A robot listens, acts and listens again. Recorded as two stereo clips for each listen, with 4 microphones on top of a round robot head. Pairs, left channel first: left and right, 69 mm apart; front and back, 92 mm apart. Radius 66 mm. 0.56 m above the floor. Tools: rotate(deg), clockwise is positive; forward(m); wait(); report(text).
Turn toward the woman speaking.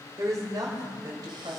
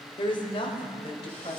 rotate(45)
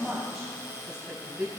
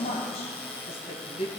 rotate(10)
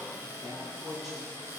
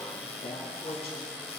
report("Found it: a woman speaking, straight ahead.")